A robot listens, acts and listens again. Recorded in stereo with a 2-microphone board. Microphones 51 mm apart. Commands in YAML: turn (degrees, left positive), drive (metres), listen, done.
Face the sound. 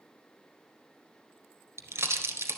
turn: -70
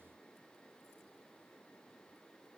listen: true
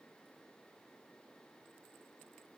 done: "I heard a pop, but can't make it out now. It was about straight ahead or 40° right."